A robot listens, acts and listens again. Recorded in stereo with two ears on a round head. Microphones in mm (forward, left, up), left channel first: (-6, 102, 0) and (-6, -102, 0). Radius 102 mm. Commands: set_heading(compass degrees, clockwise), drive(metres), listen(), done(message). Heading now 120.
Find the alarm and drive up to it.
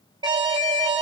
set_heading(140)
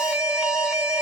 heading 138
drive(1.0)
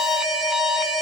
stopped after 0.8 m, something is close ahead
done("I am next to the alarm.")